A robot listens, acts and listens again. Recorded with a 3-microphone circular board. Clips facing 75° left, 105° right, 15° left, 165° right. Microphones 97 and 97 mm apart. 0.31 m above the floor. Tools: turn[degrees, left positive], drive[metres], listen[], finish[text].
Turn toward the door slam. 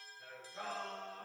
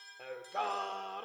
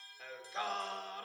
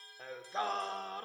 Action: listen[]
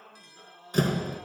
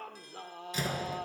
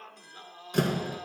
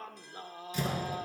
Thought: The door slam: 40° left.
Action: turn[40]
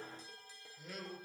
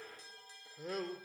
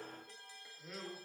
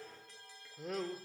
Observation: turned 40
Action: finish[Facing where the door slam came from. I can't hear it now.]